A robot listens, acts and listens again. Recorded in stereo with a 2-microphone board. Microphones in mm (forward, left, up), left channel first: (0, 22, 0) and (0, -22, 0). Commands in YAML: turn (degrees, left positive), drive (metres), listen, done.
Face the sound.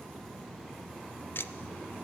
turn: 55
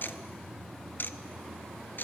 turn: 55
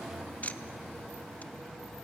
turn: 40
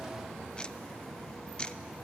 turn: 25
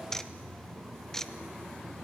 turn: 10
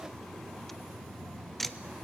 done: "Facing the ticking, under 1 m away."